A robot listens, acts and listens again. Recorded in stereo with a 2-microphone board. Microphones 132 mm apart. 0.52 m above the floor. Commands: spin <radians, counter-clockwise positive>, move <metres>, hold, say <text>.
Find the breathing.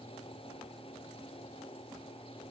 hold
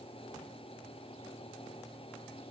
hold
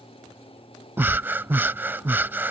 spin -0.52
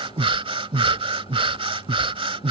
spin -2.36
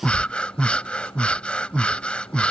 spin 0.17
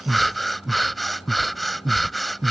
say Facing the breathing.